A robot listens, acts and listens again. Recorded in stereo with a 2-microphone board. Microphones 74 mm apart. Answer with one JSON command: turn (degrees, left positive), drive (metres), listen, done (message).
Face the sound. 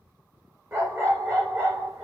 {"turn": -40}
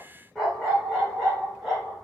{"done": "Facing the dog barking, over 4 m away."}